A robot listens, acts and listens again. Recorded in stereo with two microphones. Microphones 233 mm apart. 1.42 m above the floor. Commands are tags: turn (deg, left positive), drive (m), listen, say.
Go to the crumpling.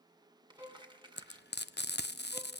<turn deg="-20"/>
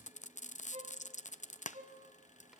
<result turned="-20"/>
<listen/>
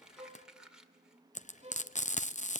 <drive m="1.0"/>
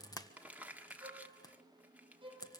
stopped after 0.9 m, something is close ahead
<turn deg="-10"/>
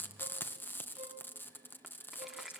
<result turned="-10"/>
<say>I am next to the crumpling.</say>